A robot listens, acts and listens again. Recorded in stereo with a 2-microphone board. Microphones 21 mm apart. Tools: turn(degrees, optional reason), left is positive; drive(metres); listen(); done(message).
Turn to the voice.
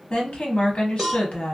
turn(degrees=60, reason="The woman speaking: about 60° left or 120° left.")
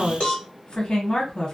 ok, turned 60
turn(degrees=45, reason="So it is at 45° left.")
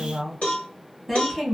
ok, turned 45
turn(degrees=-10, reason="The woman speaking is now 10° right.")
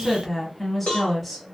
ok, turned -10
done("Facing the woman speaking.")